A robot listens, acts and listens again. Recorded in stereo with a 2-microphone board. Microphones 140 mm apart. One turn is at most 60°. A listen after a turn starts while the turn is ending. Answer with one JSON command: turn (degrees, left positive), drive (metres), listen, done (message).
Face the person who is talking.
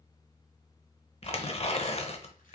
{"listen": true}
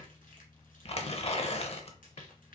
{"listen": true}
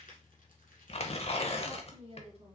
{"turn": -45}
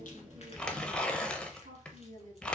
{"turn": -60}
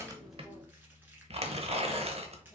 {"turn": -25}
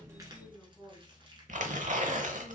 {"done": "Facing the woman speaking."}